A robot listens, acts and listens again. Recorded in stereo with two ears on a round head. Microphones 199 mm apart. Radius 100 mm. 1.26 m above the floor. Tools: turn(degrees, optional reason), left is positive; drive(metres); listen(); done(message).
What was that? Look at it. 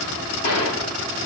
turn(degrees=90)
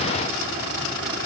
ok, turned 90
done("I heard a gunshot from this way, but can't make it out now.")